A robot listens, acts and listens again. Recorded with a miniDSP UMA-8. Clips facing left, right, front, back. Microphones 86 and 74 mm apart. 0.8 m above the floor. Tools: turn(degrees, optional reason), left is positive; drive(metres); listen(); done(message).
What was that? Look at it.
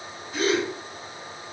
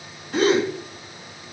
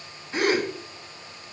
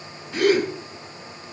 turn(degrees=-65, reason="The gasp: 65° right.")
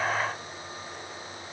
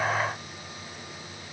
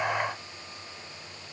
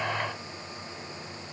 done("I heard a gasp from this way, but can't make it out now.")